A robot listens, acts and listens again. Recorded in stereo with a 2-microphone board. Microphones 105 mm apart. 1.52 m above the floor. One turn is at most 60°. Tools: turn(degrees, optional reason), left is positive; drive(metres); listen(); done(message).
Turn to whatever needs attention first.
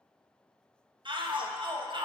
turn(degrees=-50, reason="The shout: about 50° right or 130° right.")
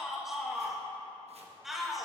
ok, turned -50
done("Found it: a shout, straight ahead, 1 to 2 m away.")